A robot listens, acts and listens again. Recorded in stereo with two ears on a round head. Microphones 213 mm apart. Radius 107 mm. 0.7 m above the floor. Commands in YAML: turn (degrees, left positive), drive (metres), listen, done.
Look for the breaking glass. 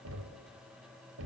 listen: true
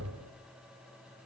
listen: true
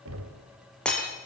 turn: 30
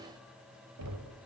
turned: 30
listen: true
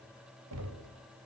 done: "I heard breaking glass, but can't make it out now. It was about 25° right or 145° left."